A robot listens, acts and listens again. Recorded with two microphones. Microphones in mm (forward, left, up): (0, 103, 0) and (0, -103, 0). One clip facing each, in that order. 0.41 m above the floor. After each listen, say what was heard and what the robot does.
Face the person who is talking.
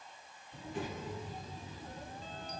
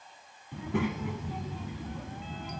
The child speaking: about 75° right or 105° right. Turn 75° right.
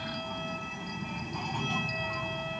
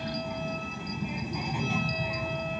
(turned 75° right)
So it is at 10° right. Turn 10° right.
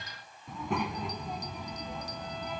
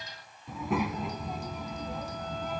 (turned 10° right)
Found it: a child speaking, straight ahead.